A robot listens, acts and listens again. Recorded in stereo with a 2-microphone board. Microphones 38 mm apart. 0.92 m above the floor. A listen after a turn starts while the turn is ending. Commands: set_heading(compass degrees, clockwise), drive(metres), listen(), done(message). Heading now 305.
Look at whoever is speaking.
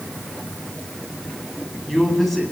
set_heading(275)
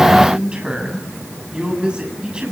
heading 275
set_heading(300)
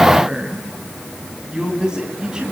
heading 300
set_heading(320)
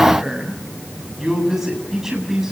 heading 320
set_heading(330)
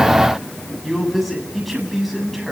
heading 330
done("Found it: a man speaking, straight ahead.")